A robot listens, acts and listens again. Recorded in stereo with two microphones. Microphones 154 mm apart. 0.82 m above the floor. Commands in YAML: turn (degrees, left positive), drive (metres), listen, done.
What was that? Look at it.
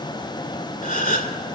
turn: 60
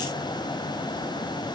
listen: true
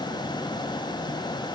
done: "I heard a gasp, but can't make it out now. It was about straight ahead or 60° left."